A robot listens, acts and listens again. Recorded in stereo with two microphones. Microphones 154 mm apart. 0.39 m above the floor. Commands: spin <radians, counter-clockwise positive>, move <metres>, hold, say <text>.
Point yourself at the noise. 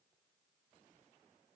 hold
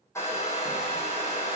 spin 0.35
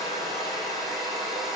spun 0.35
say Facing the hair dryer.